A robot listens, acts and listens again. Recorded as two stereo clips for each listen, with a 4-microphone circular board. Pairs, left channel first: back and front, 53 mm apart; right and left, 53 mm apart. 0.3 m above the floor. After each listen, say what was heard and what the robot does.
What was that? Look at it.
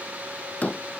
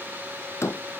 The door slam: 120° right. Turn 120° right.
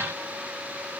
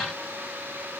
Facing where the door slam came from. I can't hear it now.